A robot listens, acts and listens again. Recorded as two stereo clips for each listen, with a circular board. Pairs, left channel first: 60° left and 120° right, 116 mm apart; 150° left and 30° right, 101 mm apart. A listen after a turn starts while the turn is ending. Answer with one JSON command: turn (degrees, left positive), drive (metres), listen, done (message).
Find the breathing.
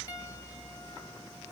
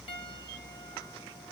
{"listen": true}
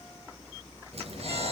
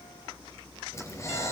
{"turn": -150}
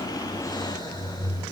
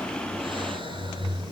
{"done": "Found it: breathing, straight ahead, over 4 m away."}